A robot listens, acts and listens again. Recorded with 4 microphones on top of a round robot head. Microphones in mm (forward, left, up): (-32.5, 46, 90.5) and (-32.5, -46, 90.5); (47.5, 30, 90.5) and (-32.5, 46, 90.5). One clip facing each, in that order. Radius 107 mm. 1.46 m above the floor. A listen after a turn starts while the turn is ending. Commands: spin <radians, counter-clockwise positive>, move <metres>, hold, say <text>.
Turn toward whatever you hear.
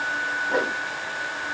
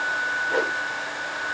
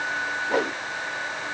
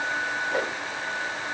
spin 0.17
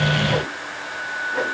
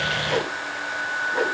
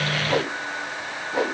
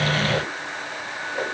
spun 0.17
say Found it: a whoosh, straight ahead, 1 to 2 m away.